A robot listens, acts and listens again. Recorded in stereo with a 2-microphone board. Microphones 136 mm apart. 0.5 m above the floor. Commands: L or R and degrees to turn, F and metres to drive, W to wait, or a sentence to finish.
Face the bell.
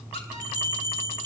R30
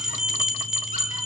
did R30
Found it: a bell, straight ahead.